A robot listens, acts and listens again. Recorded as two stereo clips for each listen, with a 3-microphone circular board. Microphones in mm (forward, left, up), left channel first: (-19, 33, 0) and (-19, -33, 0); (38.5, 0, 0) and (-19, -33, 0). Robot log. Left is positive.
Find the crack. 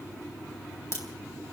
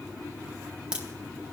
note: The crack: 135° left.
cmd yaw +135
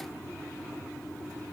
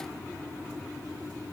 end: Facing where the crack came from. I can't hear it now.